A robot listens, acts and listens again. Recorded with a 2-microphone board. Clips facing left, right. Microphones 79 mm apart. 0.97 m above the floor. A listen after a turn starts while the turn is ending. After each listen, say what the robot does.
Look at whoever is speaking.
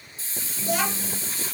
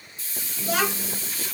Turn 90° right.
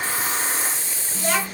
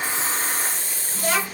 Turn 10° right.
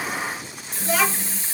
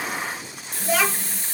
Facing the child speaking.